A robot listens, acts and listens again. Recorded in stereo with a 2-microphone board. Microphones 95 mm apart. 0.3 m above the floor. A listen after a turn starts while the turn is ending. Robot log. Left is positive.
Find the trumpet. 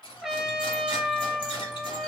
cmd yaw -30
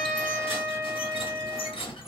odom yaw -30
note: So it is at 145° right.
cmd yaw -145
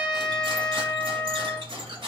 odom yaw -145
note: The trumpet is now 15° left.
cmd yaw +15
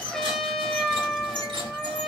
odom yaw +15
end: Facing the trumpet, under 1 m away.